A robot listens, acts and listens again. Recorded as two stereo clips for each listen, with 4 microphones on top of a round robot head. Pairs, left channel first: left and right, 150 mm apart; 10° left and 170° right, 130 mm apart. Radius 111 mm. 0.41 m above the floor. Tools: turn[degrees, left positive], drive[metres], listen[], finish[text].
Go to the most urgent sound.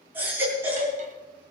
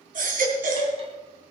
Thought: The baby crying: 170° right.
Action: turn[-170]
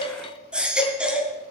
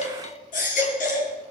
Action: drive[1.0]
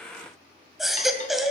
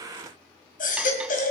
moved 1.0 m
Action: drive[1.0]
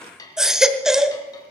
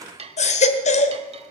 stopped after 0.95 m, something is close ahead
Action: finish[Arrived at the baby crying, straight ahead.]